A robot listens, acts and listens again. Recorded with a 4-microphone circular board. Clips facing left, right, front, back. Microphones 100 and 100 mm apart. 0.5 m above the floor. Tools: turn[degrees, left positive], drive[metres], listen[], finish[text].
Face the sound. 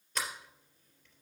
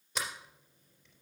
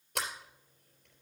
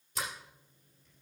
Thought: The sliding door: 10° right.
Action: turn[-10]
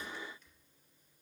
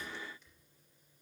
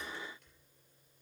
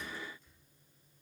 Action: listen[]
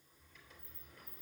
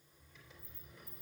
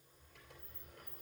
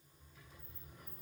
Action: finish[Found it: a sliding door, straight ahead.]